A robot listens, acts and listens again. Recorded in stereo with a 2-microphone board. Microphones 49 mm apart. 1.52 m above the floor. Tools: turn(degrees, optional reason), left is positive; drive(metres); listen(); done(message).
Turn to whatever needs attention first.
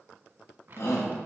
turn(degrees=55, reason="The shout: about 55° left or 125° left.")
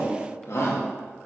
turn(degrees=65, reason="So it is at 65° left.")
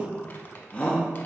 turn(degrees=25, reason="The shout is now 25° left.")
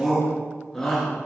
done("Found it: a shout, straight ahead.")